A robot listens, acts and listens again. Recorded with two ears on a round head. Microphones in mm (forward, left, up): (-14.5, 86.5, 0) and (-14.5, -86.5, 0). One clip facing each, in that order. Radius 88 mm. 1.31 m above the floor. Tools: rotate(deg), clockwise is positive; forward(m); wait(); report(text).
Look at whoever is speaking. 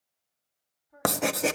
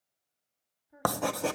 rotate(30)
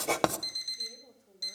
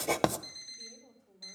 rotate(-15)
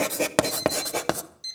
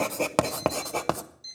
wait()
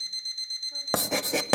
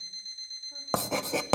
wait()
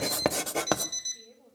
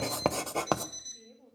report("Facing the woman speaking, 2 to 4 m away.")